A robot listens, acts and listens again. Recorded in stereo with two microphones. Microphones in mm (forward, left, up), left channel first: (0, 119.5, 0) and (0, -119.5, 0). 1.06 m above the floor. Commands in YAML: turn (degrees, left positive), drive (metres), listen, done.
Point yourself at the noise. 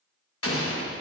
turn: 65
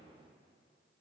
listen: true
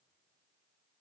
done: "I heard an explosion, but can't make it out now. It was about straight ahead or 50° left."